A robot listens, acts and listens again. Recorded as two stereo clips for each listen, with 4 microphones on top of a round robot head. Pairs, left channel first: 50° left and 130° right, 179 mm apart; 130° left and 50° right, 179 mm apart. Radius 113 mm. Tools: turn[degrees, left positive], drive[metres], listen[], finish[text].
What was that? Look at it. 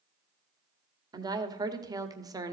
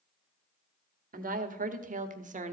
Thought: The woman speaking: 70° right.
Action: turn[-70]
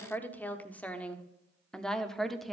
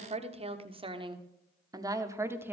Thought: The woman speaking is now 40° right.
Action: turn[-40]
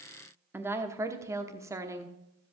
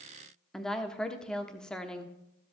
Thought: The woman speaking is now 150° right.
Action: turn[-150]
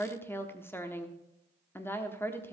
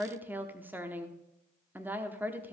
Action: finish[Found it: a woman speaking, straight ahead, 1 to 2 m away.]